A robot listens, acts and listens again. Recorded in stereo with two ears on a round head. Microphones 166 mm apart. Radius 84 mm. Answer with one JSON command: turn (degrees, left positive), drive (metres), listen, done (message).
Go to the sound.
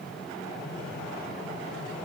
{"listen": true}
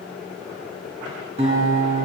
{"turn": -35}
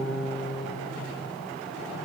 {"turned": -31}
{"drive": 1.0}
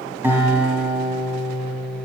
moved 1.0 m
{"turn": -10}
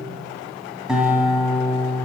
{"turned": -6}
{"drive": 1.0}
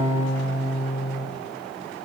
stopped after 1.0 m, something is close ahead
{"turn": -10}
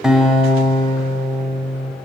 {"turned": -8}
{"done": "I am next to the guitar."}